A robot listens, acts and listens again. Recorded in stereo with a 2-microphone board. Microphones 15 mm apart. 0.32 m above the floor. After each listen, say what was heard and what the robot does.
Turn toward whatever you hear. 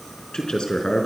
The man speaking: about 70° left or 110° left. Turn 70° left.
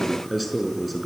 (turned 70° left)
So it is at 10° left. Turn 10° left.
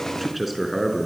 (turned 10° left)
Found it: a man speaking, straight ahead.